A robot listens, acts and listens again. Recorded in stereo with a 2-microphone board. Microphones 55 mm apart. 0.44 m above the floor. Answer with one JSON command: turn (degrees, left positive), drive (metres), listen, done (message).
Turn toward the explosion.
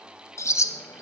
{"listen": true}
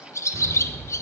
{"turn": -75}
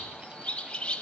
{"listen": true}
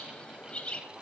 {"done": "I heard an explosion, but can't make it out now. It was about straight ahead or 30° right."}